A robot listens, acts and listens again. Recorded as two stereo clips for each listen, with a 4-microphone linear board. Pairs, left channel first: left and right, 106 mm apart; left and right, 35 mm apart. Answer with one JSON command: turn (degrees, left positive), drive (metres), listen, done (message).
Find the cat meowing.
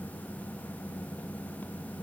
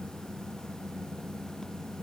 {"listen": true}
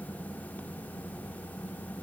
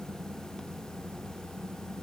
{"listen": true}
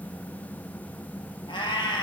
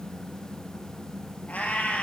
{"turn": 45}
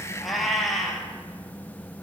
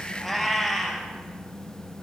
{"done": "Facing the cat meowing."}